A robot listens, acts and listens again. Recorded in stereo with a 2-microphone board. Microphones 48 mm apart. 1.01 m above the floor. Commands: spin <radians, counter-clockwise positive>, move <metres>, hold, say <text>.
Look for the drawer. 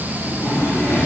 spin 1.05
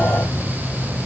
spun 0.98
hold
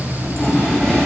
say Facing the drawer.